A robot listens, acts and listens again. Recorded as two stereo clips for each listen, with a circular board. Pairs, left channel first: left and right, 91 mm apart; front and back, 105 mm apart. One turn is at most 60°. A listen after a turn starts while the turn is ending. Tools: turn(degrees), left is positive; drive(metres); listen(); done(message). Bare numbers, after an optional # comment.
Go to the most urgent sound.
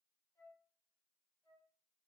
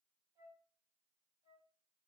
listen()
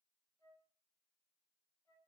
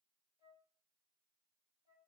listen()
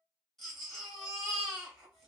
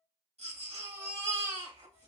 # The baby crying: 175° left.
turn(60)
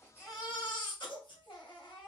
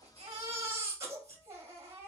# The baby crying is now 120° left.
turn(60)
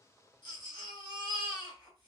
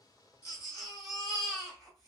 # The baby crying is now 50° left.
turn(50)
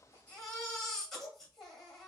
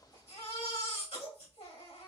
drive(1.0)
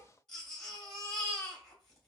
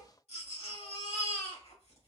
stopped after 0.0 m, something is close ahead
# The baby crying is now 10° left.
turn(10)
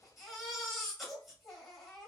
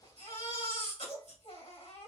done("Something is in my way. I am facing the baby crying but have not reached it.")